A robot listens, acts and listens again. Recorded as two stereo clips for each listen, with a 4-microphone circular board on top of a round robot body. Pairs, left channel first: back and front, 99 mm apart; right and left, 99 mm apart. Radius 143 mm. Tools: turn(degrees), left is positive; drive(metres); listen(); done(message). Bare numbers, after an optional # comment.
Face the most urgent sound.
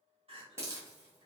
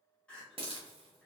# The crying: 10° right.
turn(-10)
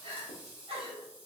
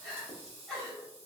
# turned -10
done("Found it: crying, straight ahead, 1 to 2 m away.")